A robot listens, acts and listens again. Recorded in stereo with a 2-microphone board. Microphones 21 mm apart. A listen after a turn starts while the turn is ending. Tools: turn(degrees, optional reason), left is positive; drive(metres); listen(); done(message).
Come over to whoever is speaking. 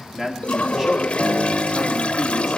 turn(degrees=-20, reason="The man speaking: about 20° right or 160° right.")
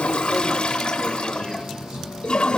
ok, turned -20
listen()
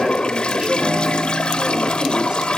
listen()
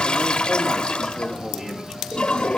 done("I heard a man speaking, but can't make it out now. It was about straight ahead or 140° right. I did not reach it.")